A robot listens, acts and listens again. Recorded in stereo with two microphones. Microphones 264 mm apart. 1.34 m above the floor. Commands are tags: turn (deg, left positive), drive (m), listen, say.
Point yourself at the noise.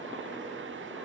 <listen/>
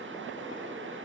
<listen/>
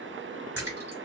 <turn deg="-70"/>
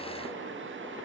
<listen/>
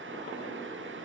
<say>I heard a splash, but can't make it out now. It was about straight ahead or 40° right.</say>